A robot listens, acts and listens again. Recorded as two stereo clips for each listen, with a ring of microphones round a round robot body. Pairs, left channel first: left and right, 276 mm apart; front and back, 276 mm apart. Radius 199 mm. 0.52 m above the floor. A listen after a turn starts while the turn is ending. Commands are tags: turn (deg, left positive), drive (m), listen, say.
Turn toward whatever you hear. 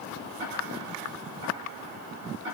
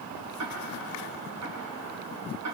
<turn deg="-150"/>
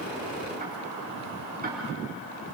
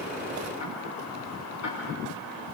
<listen/>
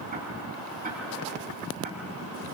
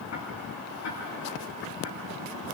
<turn deg="-30"/>
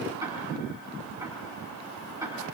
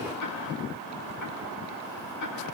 <turn deg="-10"/>
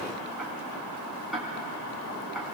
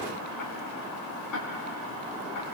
<say>Found it: ticking, straight ahead, over 4 m away.</say>